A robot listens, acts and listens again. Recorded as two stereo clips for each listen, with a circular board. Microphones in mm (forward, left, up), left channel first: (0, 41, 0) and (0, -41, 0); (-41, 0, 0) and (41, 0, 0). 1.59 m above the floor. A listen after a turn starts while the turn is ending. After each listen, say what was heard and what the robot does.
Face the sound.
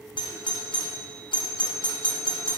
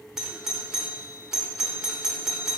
The doorbell: 85° left. Turn 85° left.
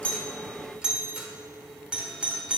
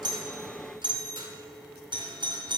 The doorbell is now 10° right. Turn 10° right.
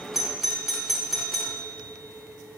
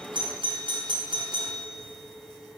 Facing the doorbell.